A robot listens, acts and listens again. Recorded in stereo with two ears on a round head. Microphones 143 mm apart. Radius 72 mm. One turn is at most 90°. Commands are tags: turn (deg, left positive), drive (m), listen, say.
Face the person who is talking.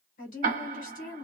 <turn deg="55"/>
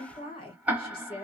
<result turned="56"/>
<turn deg="40"/>
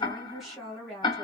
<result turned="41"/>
<say>Facing the woman speaking.</say>